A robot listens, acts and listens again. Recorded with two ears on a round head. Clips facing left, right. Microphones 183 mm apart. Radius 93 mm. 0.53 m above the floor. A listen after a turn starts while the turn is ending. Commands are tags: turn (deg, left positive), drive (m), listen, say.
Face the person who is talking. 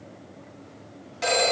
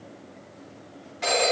<listen/>
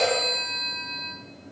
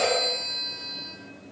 <listen/>
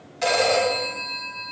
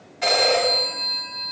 <say>I can't make out anyone speaking to turn to.</say>